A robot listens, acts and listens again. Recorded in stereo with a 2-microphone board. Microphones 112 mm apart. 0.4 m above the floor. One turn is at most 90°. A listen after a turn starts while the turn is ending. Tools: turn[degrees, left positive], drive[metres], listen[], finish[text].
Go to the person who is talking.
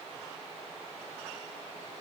Action: listen[]
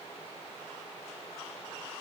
Action: listen[]
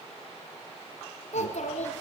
Action: turn[90]
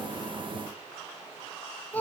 Thought: So it is at 15° left.
Action: turn[15]
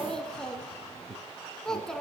Action: drive[1.0]
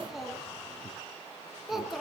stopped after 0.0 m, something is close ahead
Action: finish[Something is in my way. I am facing the child speaking but have not reached it.]